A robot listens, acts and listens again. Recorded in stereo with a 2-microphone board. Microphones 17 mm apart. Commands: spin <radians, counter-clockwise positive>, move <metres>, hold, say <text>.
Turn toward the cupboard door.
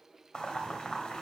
hold
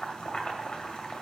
hold
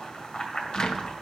spin 0.96
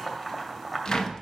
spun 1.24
spin 0.87
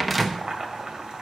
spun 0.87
say Found it: a cupboard door, straight ahead, under 1 m away.